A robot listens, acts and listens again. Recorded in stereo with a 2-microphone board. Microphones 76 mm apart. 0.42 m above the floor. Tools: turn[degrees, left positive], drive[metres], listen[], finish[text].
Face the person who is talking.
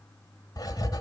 Action: listen[]
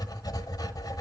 Action: listen[]
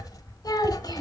Thought: The child speaking: about 60° left or 120° left.
Action: turn[60]
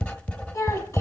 Thought: So it is at 50° left.
Action: turn[50]
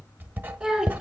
Action: finish[Found it: a child speaking, straight ahead.]